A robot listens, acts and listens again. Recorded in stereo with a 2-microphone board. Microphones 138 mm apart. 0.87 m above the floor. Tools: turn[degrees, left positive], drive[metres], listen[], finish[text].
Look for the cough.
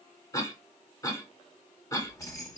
Thought: The cough: about 25° left or 155° left.
Action: turn[25]
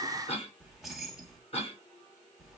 Thought: So it is at 130° left.
Action: turn[130]
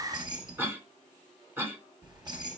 Thought: The cough is now 15° right.
Action: turn[-15]
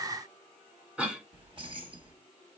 Thought: The cough is now 10° right.
Action: turn[-10]
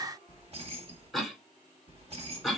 Action: finish[Found it: a cough, straight ahead, 1 to 2 m away.]